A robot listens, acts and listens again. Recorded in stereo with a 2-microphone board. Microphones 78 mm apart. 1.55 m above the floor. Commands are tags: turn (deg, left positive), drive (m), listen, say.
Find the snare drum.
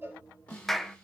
<turn deg="15"/>
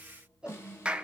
<turn deg="145"/>
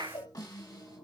<turn deg="50"/>
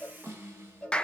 <turn deg="-30"/>
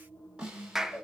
<turn deg="-15"/>
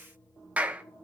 <listen/>
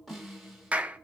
<say>Facing the snare drum, over 4 m away.</say>